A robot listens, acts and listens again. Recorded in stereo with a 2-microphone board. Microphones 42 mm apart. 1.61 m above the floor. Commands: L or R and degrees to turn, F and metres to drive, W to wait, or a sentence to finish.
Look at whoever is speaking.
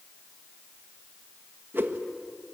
W
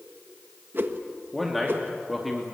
R30
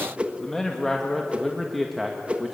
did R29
R30
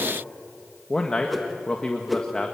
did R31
L20
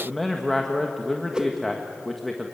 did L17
Facing the man speaking, 1 to 2 m away.